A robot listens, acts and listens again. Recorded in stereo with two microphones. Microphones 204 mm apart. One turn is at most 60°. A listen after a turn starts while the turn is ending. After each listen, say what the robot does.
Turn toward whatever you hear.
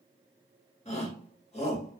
Turn 30° left.
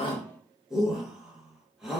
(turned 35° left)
Facing the shout.